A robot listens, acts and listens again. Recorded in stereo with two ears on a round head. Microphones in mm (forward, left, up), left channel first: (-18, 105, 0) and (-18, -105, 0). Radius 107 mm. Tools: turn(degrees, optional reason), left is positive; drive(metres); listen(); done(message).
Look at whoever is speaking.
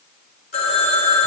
listen()
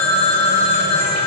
listen()
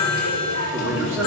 turn(degrees=-30)
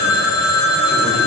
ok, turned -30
listen()
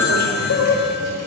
listen()
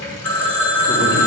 done("I heard a man speaking, but can't make it out now. It was about 20° left or 140° right.")